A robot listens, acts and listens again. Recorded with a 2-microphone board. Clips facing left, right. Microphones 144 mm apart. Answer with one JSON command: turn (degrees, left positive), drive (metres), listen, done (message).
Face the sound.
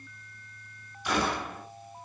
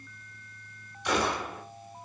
{"turn": 30}
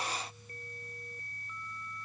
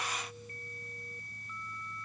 {"listen": true}
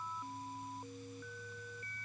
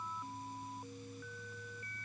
{"done": "I heard a gunshot, but can't make it out now. It was about 25° right or 145° left."}